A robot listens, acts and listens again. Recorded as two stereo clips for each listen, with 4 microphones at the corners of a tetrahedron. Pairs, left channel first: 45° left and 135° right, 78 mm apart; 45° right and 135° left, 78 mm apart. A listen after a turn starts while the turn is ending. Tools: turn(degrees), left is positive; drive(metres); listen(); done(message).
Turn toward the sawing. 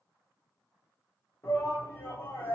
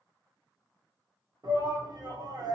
listen()
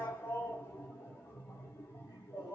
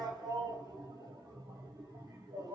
listen()
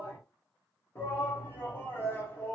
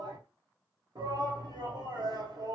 done("I can't make out sawing to turn to.")